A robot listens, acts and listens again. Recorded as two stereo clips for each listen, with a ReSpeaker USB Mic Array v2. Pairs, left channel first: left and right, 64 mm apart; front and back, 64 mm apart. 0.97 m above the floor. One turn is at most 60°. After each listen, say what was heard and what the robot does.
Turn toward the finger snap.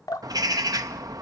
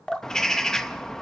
Keep listening.
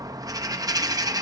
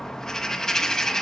Keep listening.
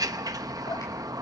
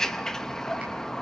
I can't make out a finger snap to turn to.